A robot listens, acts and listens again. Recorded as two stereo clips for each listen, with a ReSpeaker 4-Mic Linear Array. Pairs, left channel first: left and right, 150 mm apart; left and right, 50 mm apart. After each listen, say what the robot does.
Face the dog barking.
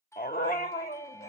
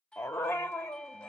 Turn 90° left.
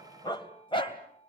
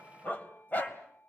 Turn 35° left.
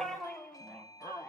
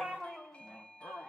Turn 10° left.
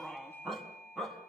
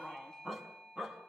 Found it: a dog barking, straight ahead, over 4 m away.